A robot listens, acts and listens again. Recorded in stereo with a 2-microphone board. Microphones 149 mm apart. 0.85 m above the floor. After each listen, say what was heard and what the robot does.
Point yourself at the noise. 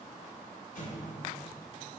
Turn 90° left.
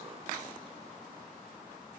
I heard an explosion from this way, but can't make it out now.